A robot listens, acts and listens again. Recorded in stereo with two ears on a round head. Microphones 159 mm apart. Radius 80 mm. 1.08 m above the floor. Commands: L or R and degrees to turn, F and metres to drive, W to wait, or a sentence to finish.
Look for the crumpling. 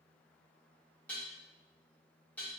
W
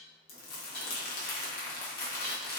L55
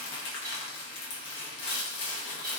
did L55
L70
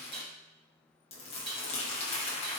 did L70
L35
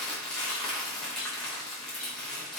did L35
Facing the crumpling.